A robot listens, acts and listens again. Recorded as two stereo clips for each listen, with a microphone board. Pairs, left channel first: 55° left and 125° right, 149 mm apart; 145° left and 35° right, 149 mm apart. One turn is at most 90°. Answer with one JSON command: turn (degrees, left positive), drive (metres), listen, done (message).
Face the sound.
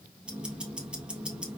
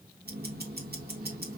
{"turn": -40}
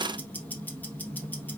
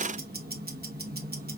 {"turn": -25}
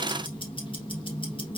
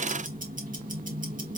{"done": "Facing the ticking, 1 to 2 m away."}